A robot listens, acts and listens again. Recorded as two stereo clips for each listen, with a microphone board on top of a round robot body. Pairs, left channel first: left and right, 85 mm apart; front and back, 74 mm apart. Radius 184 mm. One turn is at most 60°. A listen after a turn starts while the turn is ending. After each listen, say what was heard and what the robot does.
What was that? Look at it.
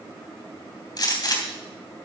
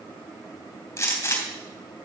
The gunshot: 50° left. Turn 50° left.
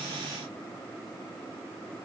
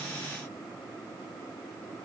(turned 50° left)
I heard a gunshot from this way, but can't make it out now.